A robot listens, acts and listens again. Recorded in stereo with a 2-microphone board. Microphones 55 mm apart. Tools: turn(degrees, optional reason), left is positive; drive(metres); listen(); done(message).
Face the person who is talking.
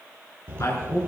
turn(degrees=70, reason="The woman speaking: about 70° left or 110° left.")
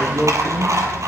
listen()
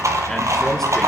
listen()
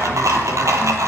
done("I heard a woman speaking, but can't make it out now. It was about straight ahead or 40° left.")